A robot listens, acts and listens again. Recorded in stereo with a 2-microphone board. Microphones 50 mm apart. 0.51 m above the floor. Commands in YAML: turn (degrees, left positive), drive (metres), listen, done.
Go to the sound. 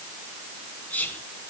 turn: 40
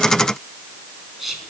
drive: 1.0
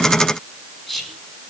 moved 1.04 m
drive: 1.0
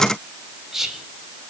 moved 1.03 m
drive: 1.0
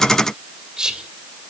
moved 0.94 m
turn: -15
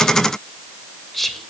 drive: 1.0
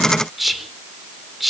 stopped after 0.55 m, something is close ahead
done: "Arrived at the whispering, straight ahead."